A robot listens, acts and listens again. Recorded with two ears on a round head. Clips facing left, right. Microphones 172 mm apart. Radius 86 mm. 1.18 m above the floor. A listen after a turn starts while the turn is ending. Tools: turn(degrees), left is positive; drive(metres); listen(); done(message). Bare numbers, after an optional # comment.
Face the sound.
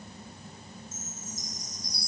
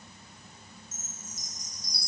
turn(-90)
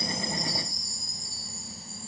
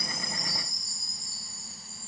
done("Facing the chime, 1 to 2 m away.")